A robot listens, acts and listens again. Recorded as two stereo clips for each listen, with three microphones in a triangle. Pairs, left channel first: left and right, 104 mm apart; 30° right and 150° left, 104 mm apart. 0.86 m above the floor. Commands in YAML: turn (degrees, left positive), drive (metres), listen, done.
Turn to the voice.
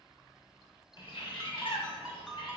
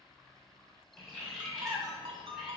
listen: true
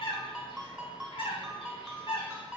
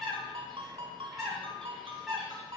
listen: true
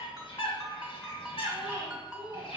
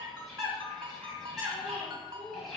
turn: -20
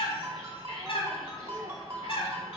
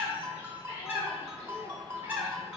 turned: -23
listen: true
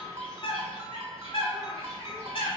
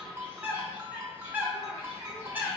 listen: true
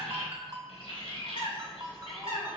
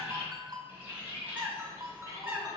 done: "Facing where the child speaking came from. I can't hear it now."